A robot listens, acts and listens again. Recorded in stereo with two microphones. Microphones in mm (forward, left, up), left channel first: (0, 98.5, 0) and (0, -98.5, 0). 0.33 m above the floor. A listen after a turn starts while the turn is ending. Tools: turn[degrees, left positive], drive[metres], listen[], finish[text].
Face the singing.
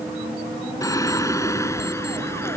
Action: turn[30]
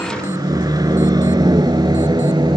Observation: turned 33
Thought: So it is at 25° right.
Action: turn[-25]
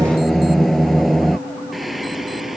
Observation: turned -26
Action: finish[Found it: singing, straight ahead.]